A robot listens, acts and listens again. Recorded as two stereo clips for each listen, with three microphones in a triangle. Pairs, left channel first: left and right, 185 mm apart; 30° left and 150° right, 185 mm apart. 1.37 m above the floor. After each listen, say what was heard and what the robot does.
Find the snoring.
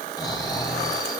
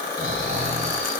The snoring: 160° left. Turn 160° left.
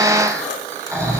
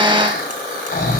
The snoring is now 15° right. Turn 15° right.
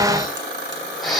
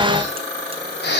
Facing the snoring.